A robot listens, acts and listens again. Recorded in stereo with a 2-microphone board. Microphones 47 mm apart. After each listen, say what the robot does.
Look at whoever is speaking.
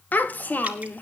Turn 40° left.
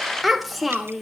Facing the child speaking.